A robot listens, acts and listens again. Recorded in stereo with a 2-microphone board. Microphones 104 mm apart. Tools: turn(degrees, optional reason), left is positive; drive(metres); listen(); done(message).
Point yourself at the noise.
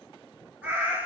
turn(degrees=-30)
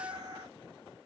turn(degrees=-135, reason="So it is at 135° right.")
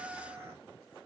turn(degrees=-30, reason="The cat meowing is now 30° right.")
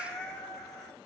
done("Facing the cat meowing, 1 to 2 m away.")